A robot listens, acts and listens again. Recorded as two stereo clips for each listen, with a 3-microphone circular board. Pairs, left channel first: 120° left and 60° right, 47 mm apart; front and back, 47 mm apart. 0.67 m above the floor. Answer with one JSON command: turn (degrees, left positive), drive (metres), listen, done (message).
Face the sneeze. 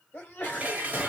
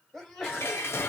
{"turn": 80}
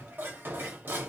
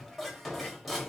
{"done": "I heard a sneeze from this way, but can't make it out now."}